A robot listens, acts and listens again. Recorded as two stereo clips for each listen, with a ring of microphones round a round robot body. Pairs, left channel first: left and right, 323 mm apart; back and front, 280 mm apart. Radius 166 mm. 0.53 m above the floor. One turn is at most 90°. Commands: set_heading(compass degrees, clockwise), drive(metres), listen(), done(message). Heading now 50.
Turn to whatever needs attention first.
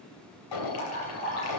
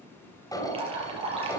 set_heading(320)
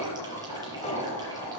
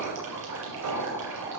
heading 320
set_heading(300)
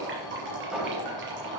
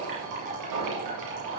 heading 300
done("Facing the alarm.")